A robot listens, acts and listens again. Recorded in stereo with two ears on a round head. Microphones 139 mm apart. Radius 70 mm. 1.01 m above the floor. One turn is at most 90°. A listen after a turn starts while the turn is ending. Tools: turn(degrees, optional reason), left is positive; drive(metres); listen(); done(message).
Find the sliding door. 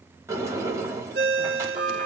turn(degrees=-20, reason="The sliding door: about 20° right or 160° right.")
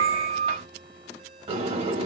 turn(degrees=-90, reason="So it is at 140° right.")
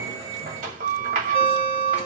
turn(degrees=-60, reason="The sliding door is now 60° right.")
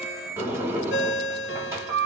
turn(degrees=-20, reason="The sliding door is now 20° right.")
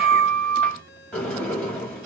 done("Facing the sliding door.")